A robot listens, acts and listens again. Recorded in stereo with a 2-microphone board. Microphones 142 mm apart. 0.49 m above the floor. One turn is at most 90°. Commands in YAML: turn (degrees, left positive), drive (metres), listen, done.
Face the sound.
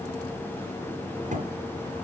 turn: -60
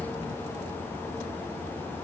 listen: true
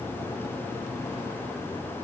done: "I heard a thud, but can't make it out now. It was about straight ahead or 60° right."